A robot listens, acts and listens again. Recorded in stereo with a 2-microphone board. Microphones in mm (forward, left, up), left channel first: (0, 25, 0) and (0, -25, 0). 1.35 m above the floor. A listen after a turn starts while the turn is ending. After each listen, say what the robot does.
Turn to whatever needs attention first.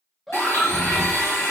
Turn 30° left.
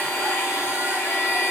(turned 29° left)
Keep listening.
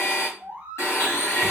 Turn 25° right.
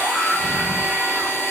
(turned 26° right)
Facing the scream.